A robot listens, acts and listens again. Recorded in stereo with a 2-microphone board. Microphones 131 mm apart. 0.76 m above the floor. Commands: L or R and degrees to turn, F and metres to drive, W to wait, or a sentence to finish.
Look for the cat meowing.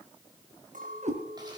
R65
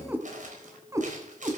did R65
R30
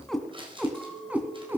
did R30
R15
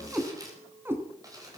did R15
R20
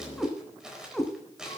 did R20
Found it: a cat meowing, straight ahead, 2 to 4 m away.